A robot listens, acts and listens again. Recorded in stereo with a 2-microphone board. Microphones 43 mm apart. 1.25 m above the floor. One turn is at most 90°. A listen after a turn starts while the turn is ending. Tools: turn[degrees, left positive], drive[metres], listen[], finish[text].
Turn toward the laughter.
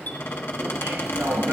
Action: turn[-90]
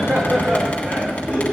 Thought: So it is at 25° right.
Action: turn[-25]
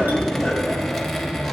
Action: listen[]
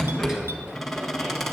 Thought: The laughter is now 10° right.
Action: turn[-10]
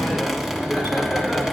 Action: finish[Found it: laughter, straight ahead.]